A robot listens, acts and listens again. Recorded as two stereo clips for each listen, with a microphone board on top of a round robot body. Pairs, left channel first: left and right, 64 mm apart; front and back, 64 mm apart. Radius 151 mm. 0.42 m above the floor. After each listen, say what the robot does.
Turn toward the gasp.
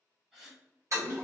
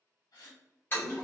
Turn 10° right.
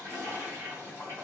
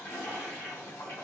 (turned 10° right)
I heard a gasp from this way, but can't make it out now.